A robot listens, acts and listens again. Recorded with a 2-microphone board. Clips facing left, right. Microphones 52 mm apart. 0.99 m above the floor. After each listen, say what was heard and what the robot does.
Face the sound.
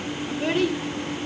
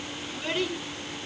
The child speaking: about 45° left or 135° left. Turn 45° left.
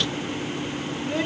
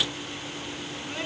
So it is at 90° left. Turn 90° left.
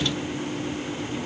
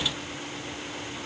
Keep listening.
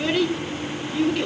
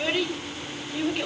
The child speaking is now 15° right. Turn 15° right.
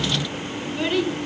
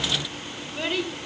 Found it: a child speaking, straight ahead, over 4 m away.